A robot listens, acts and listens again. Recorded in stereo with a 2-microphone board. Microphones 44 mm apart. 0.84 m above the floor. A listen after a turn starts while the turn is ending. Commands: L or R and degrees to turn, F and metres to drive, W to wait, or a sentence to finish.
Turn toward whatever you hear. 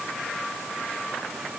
W
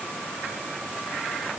W
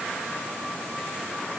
I can't make out anything to turn to.